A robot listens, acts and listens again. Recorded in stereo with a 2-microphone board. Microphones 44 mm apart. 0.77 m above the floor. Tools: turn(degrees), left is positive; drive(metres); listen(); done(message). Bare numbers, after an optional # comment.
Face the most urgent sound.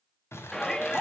turn(30)
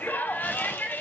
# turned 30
# So it is at 135° left.
turn(135)
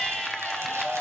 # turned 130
done("Found it: a shout, straight ahead, under 1 m away.")